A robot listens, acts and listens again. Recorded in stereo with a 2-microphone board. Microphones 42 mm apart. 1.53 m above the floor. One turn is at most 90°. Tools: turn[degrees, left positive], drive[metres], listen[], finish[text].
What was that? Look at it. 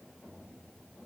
Action: listen[]
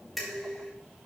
Action: turn[30]
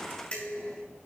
Thought: So it is at 150° left.
Action: turn[90]
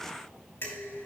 Thought: The dishes clattering is now 65° left.
Action: turn[65]
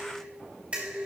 Thought: The dishes clattering is now 30° right.
Action: turn[-30]
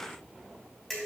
Action: finish[Facing the dishes clattering.]